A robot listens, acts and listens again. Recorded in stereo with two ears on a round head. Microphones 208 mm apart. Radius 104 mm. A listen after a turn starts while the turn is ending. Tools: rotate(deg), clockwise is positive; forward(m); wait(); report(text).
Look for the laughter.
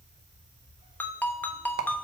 wait()
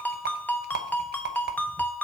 wait()
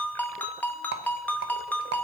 report("I can't make out laughter to turn to.")